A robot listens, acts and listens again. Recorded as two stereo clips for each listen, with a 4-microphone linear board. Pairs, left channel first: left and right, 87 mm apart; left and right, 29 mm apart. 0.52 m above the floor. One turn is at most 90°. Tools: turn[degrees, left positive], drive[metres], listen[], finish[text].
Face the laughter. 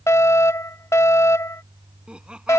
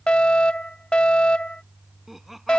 Action: turn[-30]
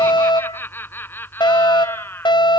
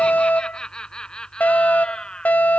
Thought: So it is at 20° left.
Action: turn[20]
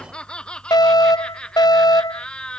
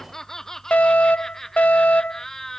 Thought: The laughter is now 10° left.
Action: turn[10]
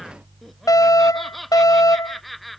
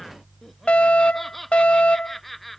Action: finish[Facing the laughter.]